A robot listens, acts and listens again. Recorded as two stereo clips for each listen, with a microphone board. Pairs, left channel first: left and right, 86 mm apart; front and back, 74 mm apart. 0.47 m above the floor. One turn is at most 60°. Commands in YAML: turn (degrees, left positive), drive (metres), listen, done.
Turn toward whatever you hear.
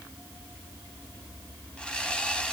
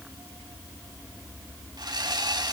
turn: 60
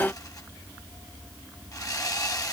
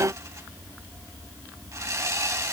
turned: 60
turn: 60
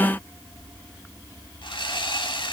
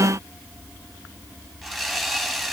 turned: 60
turn: 60
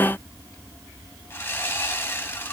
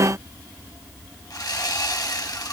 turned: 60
turn: 30
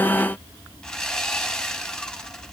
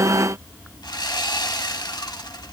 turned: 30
turn: 10
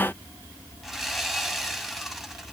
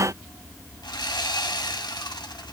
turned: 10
done: "Facing the sawing."